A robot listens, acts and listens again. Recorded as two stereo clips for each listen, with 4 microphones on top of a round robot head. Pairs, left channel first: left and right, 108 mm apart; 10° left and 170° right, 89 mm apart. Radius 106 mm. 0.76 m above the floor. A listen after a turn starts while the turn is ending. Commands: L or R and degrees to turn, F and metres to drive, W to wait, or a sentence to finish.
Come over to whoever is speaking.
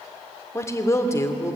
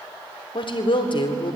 L25
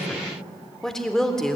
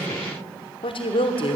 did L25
F1.0
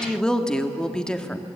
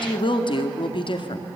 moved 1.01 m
F1.0
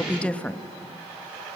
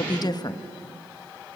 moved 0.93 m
L15
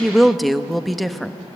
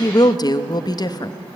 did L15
F1.0
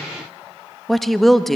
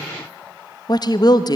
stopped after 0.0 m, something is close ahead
Arrived at the woman speaking, straight ahead.